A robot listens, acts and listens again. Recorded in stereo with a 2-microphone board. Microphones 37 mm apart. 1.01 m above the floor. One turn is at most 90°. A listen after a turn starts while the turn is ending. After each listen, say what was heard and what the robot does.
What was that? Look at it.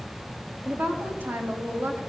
Turn 90° right.
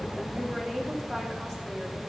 Facing the woman speaking, 2 to 4 m away.